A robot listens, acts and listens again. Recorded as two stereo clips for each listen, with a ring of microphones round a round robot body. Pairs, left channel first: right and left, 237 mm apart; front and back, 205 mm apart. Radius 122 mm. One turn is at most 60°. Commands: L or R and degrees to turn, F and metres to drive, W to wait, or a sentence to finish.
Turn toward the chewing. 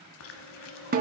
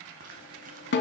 R60
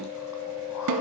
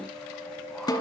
R60
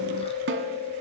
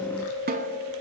R25
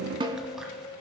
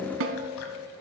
Facing the chewing, 1 to 2 m away.